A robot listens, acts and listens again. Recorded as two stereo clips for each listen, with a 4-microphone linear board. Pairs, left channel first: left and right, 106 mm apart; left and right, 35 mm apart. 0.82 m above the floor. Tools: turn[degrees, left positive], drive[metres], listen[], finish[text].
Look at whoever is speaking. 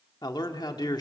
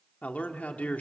Thought: The man speaking: about 40° left or 140° left.
Action: turn[40]
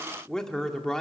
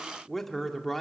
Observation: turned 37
Action: finish[Found it: a man speaking, straight ahead, 1 to 2 m away.]